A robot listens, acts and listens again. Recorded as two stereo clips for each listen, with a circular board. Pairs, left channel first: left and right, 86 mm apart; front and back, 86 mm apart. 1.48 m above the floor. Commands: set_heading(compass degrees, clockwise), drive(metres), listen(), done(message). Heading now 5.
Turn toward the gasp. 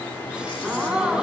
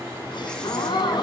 set_heading(20)
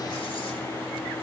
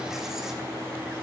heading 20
done("Facing where the gasp came from. I can't hear it now.")